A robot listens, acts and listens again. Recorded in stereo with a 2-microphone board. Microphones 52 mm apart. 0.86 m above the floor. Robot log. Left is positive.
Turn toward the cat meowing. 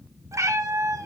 cmd yaw -90
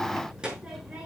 cmd idle
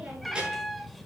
end: Found it: a cat meowing, straight ahead, 1 to 2 m away.